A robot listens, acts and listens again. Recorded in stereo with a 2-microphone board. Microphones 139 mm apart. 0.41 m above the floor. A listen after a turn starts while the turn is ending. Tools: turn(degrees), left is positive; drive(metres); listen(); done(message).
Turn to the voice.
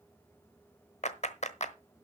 listen()
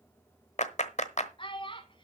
turn(degrees=40)
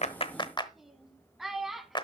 done("Found it: a child speaking, straight ahead, 1 to 2 m away.")